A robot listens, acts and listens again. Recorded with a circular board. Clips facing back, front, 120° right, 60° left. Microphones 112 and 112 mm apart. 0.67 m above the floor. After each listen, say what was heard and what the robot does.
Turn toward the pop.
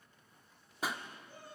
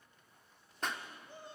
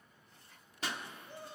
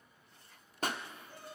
The pop: 95° left. Turn 95° left.
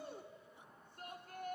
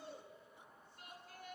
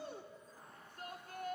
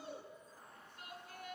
I heard a pop from this way, but can't make it out now.